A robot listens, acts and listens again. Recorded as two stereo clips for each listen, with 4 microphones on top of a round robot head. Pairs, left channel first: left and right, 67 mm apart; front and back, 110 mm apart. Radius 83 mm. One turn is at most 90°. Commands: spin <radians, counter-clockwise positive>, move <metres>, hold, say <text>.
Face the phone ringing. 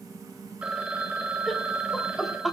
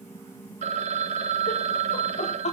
spin -1.57
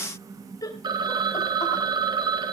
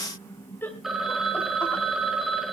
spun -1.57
spin -1.57
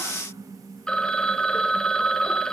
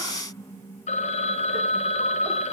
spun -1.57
spin 0.17
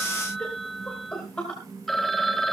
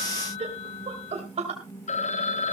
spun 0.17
say Found it: a phone ringing, straight ahead.